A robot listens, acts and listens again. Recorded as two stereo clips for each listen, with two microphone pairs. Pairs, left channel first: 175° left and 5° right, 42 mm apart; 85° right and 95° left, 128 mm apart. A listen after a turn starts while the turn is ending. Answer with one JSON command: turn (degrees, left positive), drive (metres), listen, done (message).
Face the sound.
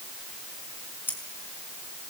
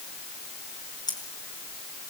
{"turn": -145}
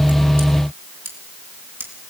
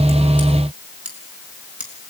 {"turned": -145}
{"turn": 10}
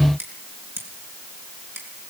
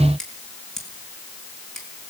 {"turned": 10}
{"done": "Found it: scissors, straight ahead, over 4 m away."}